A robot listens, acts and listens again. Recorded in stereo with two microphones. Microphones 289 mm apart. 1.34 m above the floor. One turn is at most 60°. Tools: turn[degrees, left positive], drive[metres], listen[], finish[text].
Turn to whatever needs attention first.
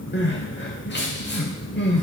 Thought: The crying: about 40° left or 140° left.
Action: turn[40]
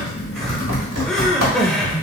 Action: finish[Facing the crying.]